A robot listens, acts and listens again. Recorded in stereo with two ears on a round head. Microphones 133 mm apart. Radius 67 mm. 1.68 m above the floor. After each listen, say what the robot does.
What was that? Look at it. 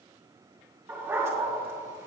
Turn 20° right.
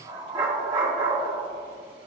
Turn 140° right.
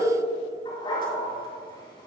Turn 35° left.
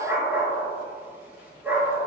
Turn 15° right.
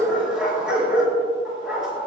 Facing the dog barking, over 4 m away.